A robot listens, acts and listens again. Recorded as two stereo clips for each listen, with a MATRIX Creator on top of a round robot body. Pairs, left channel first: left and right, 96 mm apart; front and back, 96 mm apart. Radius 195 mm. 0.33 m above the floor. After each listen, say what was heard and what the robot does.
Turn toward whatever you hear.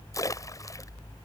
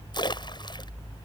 The splash: 40° left. Turn 40° left.
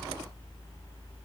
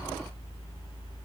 I heard a splash from this way, but can't make it out now.